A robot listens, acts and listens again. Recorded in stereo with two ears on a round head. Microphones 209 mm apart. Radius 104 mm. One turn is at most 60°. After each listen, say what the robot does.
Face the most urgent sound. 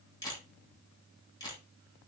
Keep listening.
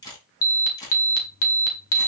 Turn 60° left.
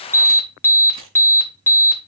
Turn 10° left.
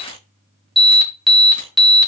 Facing the alarm.